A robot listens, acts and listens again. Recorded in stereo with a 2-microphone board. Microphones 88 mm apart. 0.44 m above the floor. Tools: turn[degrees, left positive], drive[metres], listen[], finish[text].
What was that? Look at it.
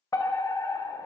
Thought: The fire alarm: about 35° left or 145° left.
Action: turn[35]
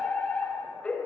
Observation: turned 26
Thought: So it is at 15° left.
Action: turn[15]
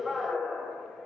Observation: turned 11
Action: finish[Found it: a fire alarm, straight ahead, over 4 m away.]